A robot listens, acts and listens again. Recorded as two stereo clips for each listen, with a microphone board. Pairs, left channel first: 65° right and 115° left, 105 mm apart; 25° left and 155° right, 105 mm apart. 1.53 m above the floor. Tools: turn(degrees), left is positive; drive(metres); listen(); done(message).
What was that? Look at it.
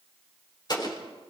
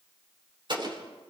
turn(degrees=-115)
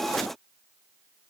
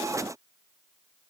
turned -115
done("I heard an explosion from this way, but can't make it out now.")